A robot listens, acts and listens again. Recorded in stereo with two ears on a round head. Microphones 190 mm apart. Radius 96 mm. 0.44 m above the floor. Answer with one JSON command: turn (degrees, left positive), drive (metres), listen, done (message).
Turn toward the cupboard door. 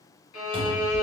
{"turn": -40}
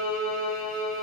{"listen": true}
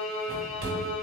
{"turn": -90}
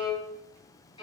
{"listen": true}
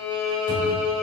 {"turn": -45}
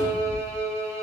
{"done": "Facing the cupboard door, 1 to 2 m away."}